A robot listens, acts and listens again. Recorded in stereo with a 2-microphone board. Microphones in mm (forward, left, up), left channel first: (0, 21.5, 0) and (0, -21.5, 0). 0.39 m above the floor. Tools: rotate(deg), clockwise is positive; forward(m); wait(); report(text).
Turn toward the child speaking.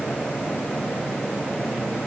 wait()
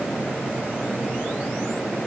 wait()
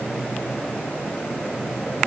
report("I can't make out a child speaking to turn to.")